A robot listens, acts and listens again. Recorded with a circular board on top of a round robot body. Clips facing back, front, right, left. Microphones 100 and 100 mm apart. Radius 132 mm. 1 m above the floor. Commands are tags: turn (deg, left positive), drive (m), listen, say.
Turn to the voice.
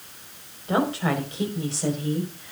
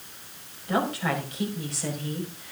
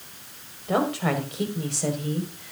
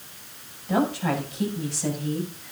<turn deg="-120"/>
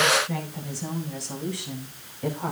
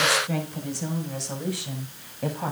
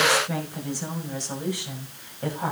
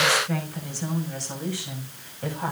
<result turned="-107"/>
<turn deg="-15"/>
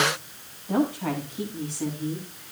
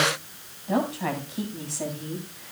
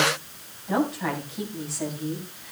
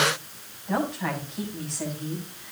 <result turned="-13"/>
<say>Found it: a woman speaking, straight ahead, over 4 m away.</say>